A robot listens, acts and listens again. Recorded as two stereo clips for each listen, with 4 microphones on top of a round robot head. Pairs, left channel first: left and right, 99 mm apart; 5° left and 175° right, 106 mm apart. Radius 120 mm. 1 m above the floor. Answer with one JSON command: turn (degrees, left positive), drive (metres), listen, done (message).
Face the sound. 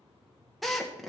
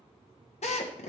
{"done": "Found it: a drill, straight ahead."}